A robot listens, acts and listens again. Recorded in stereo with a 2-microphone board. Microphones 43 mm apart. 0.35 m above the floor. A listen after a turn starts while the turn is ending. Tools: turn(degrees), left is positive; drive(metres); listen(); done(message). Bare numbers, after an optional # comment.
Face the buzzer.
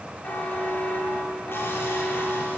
# The buzzer: about 40° left or 140° left.
turn(40)
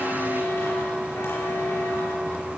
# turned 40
# So it is at 100° left.
turn(100)
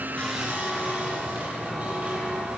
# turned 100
listen()
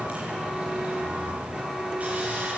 done("Facing the buzzer, over 4 m away.")